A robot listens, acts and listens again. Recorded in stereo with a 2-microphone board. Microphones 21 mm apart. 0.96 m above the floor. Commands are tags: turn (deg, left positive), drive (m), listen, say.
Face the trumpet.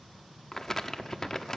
<listen/>
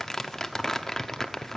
<listen/>
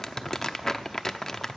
<say>I can't make out a trumpet to turn to.</say>